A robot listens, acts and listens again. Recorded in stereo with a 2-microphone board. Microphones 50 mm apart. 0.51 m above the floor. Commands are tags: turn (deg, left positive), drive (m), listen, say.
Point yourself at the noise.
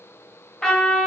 <turn deg="30"/>
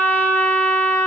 <turn deg="135"/>
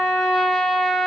<say>Found it: a trumpet, straight ahead, 1 to 2 m away.</say>